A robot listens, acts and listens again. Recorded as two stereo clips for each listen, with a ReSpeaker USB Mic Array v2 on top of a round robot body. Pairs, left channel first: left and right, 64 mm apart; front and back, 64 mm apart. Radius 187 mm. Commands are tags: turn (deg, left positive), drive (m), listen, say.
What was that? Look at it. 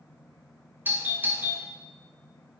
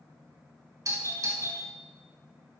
<turn deg="-150"/>
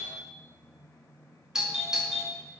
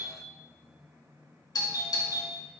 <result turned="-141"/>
<turn deg="-10"/>
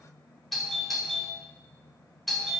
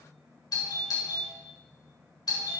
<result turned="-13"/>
<say>Found it: a doorbell, straight ahead.</say>